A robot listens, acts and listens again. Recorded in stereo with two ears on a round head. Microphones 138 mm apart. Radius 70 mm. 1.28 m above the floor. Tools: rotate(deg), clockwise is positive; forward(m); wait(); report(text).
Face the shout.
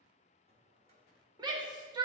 rotate(30)
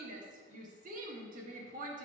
rotate(120)
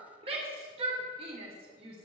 rotate(35)
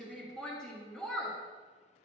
report("Found it: a shout, straight ahead.")